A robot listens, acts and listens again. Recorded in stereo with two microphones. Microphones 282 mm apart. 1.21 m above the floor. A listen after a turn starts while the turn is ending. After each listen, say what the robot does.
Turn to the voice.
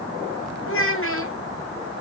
Turn 50° left.
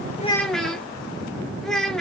Facing the child speaking, 1 to 2 m away.